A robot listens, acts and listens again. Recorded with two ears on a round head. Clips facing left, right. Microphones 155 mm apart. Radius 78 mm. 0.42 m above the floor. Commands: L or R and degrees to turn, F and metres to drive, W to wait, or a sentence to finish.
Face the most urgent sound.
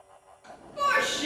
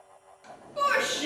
R50
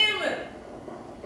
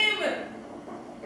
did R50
R10
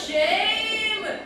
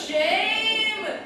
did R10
Facing the shout.